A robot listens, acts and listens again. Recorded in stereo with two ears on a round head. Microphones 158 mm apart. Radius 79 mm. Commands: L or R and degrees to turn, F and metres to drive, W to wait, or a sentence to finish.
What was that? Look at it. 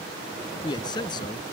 L25
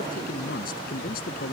L125
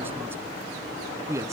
R15
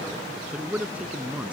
Found it: a man speaking, straight ahead.